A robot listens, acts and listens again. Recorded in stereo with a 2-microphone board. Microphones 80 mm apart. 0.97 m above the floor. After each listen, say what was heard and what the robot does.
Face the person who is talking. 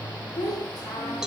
The child speaking: about 60° left or 120° left. Turn 60° left.
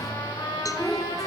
Found it: a child speaking, straight ahead.